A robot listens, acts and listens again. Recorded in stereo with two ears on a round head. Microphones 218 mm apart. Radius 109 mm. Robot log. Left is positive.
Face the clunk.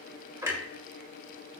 cmd yaw -30
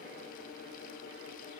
cmd idle
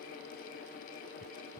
end: I heard a clunk, but can't make it out now. It was about 20° left or 140° right.